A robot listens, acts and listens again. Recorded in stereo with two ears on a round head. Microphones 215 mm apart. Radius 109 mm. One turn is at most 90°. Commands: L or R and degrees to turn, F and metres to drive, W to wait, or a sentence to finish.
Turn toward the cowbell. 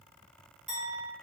W
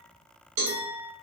R90
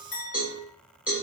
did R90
Found it: a cowbell, straight ahead, 1 to 2 m away.